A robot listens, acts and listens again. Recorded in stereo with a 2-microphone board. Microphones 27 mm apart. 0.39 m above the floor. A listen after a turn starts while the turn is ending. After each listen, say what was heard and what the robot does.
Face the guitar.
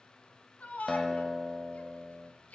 Turn 30° left.
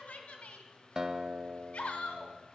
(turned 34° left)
So it is at 30° right. Turn 30° right.
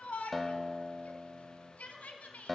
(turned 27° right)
Facing the guitar, under 1 m away.